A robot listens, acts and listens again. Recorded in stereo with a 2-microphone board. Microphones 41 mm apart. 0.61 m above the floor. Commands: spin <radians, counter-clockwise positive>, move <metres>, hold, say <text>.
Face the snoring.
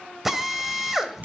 spin -0.35
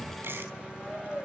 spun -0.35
say Found it: snoring, straight ahead, 2 to 4 m away.